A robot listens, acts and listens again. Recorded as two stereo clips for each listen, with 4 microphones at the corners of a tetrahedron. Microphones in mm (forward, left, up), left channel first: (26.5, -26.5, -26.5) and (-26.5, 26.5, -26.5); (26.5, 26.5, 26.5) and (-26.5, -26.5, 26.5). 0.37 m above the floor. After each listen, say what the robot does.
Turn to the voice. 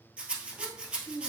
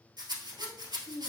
Turn 50° left.
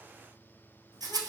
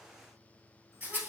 Keep listening.
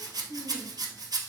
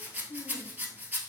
Facing the child speaking, 1 to 2 m away.